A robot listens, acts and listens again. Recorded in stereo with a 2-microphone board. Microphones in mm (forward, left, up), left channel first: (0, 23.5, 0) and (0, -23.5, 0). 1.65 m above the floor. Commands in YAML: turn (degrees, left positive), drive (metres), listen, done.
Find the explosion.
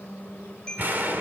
turn: -45
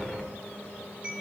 done: "Found it: an explosion, straight ahead, 2 to 4 m away."